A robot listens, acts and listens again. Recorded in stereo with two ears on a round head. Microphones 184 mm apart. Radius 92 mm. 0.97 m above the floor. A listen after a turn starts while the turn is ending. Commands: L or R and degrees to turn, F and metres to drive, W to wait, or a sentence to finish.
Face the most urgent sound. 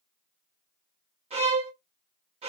W
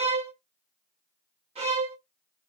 W
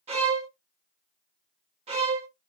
I can't make out anything urgent to turn to.